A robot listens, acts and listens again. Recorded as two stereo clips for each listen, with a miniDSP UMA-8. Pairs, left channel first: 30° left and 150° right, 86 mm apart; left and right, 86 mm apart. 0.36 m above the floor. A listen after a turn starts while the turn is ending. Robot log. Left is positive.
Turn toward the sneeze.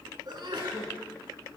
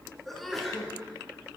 note: The sneeze: straight behind.
cmd yaw +180
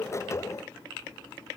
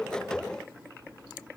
end: Facing where the sneeze came from. I can't hear it now.